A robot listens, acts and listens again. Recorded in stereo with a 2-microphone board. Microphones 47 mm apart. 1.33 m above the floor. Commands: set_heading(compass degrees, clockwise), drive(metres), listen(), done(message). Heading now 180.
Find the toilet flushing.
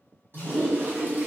set_heading(235)
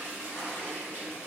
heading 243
set_heading(298)
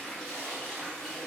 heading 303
done("Found it: a toilet flushing, straight ahead, 1 to 2 m away.")